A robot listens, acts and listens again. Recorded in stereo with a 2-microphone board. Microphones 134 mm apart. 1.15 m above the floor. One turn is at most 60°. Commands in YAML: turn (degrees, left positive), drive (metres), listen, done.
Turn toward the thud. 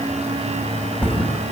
turn: 30
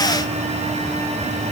listen: true
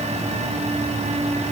done: "I heard a thud, but can't make it out now. It was about 20° right or 140° left."